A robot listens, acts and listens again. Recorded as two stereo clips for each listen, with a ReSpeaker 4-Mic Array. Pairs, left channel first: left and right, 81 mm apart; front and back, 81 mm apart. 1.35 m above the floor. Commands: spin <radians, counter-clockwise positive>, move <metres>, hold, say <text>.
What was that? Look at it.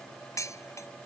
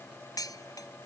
spin 0.70
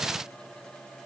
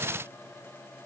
hold
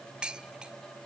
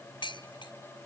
spin -0.17
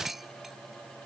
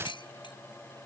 say Found it: dishes clattering, straight ahead.